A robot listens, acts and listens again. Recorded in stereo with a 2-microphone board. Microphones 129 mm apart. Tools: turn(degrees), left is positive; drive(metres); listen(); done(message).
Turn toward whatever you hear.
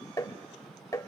turn(degrees=25)
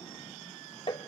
turn(degrees=125)
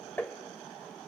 turn(degrees=15)
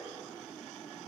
listen()
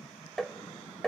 done("Facing the tapping.")